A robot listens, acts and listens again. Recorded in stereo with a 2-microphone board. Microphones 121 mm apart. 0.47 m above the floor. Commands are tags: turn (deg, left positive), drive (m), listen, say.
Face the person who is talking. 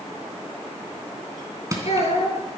<turn deg="65"/>
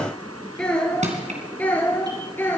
<turn deg="20"/>
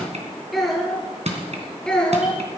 <say>Facing the child speaking.</say>